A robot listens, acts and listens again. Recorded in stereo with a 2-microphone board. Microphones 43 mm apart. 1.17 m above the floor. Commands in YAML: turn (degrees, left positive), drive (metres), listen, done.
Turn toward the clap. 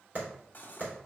turn: -40
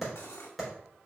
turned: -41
done: "Found it: a clap, straight ahead, 2 to 4 m away."